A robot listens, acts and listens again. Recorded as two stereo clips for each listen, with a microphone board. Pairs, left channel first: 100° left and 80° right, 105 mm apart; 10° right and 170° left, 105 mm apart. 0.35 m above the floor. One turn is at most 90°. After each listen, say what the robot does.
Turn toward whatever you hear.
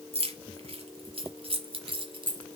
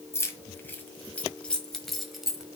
Turn 90° right.
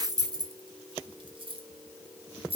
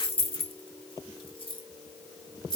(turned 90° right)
Turn 55° right.
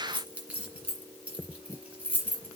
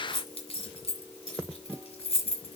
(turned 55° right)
Facing the keys jangling, 2 to 4 m away.